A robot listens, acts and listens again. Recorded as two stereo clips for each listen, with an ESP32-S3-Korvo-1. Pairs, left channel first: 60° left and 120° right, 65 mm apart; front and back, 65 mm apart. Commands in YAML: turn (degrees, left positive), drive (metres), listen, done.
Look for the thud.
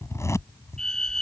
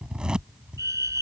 listen: true
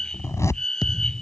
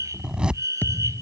turn: 60
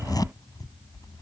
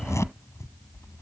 done: "I heard a thud from this way, but can't make it out now."